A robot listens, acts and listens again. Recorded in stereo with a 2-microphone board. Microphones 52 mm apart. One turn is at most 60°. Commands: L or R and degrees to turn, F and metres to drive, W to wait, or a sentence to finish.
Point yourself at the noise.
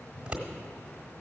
R15
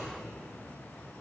W
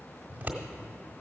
R60
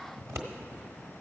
R60
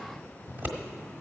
R45
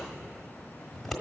Facing the scissors.